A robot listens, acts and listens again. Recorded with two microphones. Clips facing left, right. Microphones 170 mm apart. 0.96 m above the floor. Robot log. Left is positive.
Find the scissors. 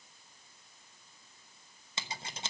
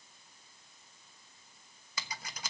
note: The scissors: about 25° left or 155° left.
cmd yaw +25
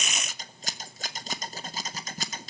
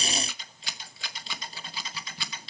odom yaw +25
note: So it is at 125° left.
cmd yaw +125
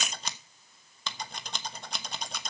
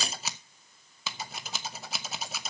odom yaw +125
end: Found it: scissors, straight ahead.